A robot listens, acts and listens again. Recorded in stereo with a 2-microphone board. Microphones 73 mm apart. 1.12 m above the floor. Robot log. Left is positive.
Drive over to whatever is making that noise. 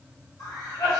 note: The cough: about 65° left or 115° left.
cmd yaw +65
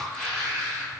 cmd fwd 1.0
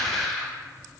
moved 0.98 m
note: The cough is now 10° left.
cmd yaw +10
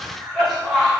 cmd fwd 1.0
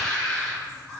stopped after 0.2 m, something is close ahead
note: The cough is now 15° left.
cmd yaw +15
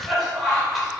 end: I am next to the cough.